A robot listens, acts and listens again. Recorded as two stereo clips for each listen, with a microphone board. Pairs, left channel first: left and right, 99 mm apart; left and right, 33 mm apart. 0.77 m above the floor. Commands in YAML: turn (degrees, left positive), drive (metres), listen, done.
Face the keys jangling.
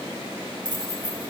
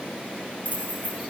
turn: -45
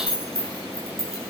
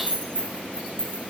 turn: -80
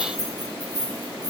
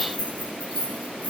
turn: -45
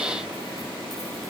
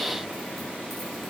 listen: true
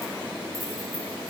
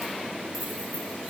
listen: true
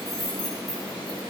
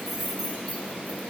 done: "Facing the keys jangling."